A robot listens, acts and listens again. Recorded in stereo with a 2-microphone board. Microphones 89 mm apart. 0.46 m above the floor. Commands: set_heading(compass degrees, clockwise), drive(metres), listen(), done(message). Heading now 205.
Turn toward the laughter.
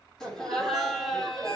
set_heading(175)
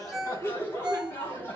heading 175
set_heading(20)
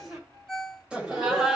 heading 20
done("Found it: laughter, straight ahead.")